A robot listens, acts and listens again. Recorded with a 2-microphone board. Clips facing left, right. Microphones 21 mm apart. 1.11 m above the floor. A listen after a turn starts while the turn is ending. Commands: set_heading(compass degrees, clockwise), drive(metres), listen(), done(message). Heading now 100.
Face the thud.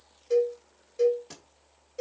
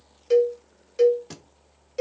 set_heading(120)
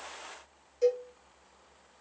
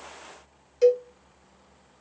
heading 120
listen()
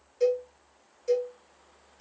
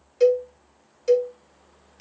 done("I heard a thud, but can't make it out now. It was about straight ahead or 140° right.")